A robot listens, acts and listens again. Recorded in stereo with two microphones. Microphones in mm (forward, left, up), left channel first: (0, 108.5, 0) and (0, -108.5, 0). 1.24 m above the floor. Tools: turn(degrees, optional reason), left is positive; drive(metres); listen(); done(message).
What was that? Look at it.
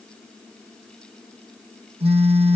turn(degrees=-25, reason="The phone buzzing: about 25° right or 155° right.")
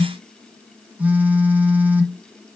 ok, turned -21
done("Facing the phone buzzing, 1 to 2 m away.")